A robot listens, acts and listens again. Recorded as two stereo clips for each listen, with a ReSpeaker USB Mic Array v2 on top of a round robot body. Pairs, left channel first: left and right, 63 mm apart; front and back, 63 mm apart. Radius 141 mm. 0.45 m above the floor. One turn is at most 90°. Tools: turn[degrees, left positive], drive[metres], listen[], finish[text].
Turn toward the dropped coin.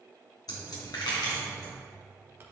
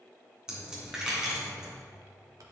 Thought: The dropped coin: 100° left.
Action: turn[90]
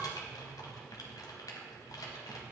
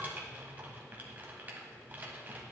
Thought: Nothing new. It was at 10° left.
Action: turn[10]
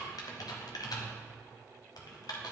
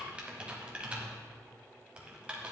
Action: finish[Facing where the dropped coin came from. I can't hear it now.]